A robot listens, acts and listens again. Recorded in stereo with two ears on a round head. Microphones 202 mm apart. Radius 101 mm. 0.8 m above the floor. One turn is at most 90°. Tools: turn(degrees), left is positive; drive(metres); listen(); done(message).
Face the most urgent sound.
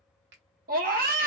turn(degrees=-45)
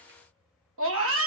turn(degrees=-90)
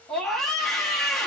done("Found it: a scream, straight ahead, under 1 m away.")